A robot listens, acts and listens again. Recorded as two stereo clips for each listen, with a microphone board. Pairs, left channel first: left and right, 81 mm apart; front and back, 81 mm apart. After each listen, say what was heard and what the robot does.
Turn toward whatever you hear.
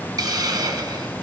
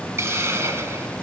The hiss: 125° right. Turn 125° right.
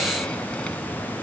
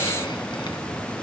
Keep listening.
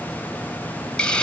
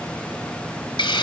The hiss is now 15° left. Turn 15° left.
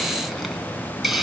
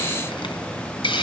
Found it: a hiss, straight ahead, 1 to 2 m away.